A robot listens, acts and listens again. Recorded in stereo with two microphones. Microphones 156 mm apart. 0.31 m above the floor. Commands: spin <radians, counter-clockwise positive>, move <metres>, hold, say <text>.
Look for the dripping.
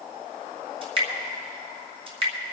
spin -0.70
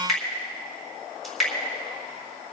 say Found it: dripping, straight ahead.